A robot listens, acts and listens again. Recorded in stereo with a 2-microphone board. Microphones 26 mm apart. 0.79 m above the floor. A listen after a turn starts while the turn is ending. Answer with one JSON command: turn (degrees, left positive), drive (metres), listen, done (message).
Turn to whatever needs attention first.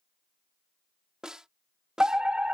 {"turn": -40}
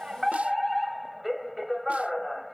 {"done": "Facing the fire alarm."}